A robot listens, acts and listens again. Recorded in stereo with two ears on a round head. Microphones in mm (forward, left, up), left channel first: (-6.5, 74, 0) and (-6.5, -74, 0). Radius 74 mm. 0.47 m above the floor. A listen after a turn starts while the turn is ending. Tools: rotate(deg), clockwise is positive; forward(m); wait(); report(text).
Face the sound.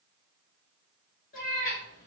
rotate(-55)
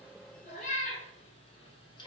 rotate(-25)
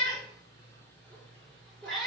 report("Facing the cat meowing, 1 to 2 m away.")